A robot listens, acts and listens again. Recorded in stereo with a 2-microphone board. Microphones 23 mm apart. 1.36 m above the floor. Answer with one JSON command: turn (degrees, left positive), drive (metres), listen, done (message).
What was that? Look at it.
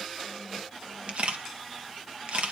{"turn": -60}
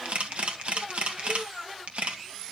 {"turn": -60}
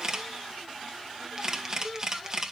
{"turn": -30}
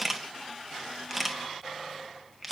{"done": "Facing the camera shutter, 1 to 2 m away."}